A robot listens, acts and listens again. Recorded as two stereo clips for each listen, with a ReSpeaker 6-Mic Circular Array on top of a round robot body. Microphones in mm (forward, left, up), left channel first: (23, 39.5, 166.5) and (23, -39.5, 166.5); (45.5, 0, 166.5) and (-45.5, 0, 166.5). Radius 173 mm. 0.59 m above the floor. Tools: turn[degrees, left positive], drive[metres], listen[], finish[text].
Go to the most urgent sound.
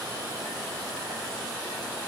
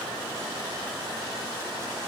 Action: listen[]
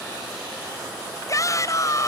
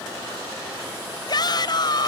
Thought: The shout: 40° left.
Action: turn[40]
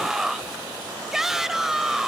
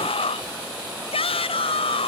Action: drive[1.0]
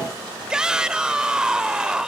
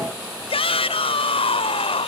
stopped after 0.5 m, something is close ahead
Thought: The shout is now 10° right.
Action: turn[-10]
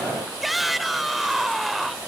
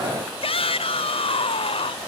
Action: finish[Something is in my way. I am facing the shout but have not reached it.]